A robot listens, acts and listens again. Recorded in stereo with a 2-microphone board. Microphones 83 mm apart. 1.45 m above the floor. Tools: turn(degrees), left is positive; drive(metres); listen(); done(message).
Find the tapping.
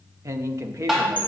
turn(degrees=-30)
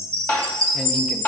turn(degrees=25)
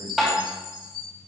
done("Found it: tapping, straight ahead, 2 to 4 m away.")